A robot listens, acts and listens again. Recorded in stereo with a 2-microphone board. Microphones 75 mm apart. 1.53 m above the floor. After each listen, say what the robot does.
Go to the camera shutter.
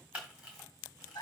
Turn 15° right.
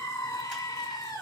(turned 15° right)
Keep listening.
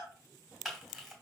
Drive 1.0 m forward.
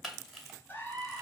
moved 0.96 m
Drive 1.0 m forward.
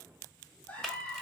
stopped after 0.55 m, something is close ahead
I am next to the camera shutter.